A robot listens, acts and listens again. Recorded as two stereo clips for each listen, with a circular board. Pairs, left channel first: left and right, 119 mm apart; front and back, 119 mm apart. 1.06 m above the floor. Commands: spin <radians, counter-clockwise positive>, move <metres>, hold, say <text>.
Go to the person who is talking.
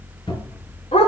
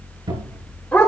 hold
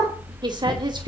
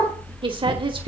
spin -2.44
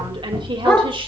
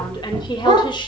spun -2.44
spin -0.79
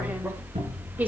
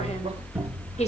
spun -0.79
hold
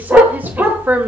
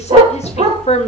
spin -0.26
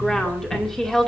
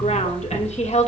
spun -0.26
move 1.0
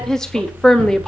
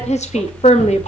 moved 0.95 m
move 1.0
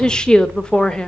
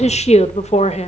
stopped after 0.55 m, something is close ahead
spin 0.17
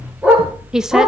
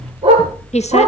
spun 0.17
say I am next to the woman speaking.